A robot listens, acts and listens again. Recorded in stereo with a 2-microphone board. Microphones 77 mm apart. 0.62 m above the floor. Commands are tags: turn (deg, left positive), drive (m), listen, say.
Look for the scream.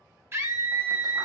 <turn deg="-35"/>
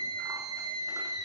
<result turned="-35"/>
<turn deg="-110"/>
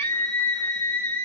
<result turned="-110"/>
<turn deg="30"/>
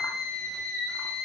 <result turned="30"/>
<say>Found it: a scream, straight ahead.</say>